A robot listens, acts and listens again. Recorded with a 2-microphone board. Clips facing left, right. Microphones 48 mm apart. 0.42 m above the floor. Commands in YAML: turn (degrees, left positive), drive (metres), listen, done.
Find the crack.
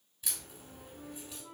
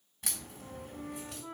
turn: -65
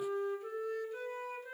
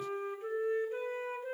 listen: true
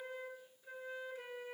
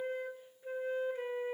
done: "I heard a crack, but can't make it out now. It was about straight ahead or 50° right."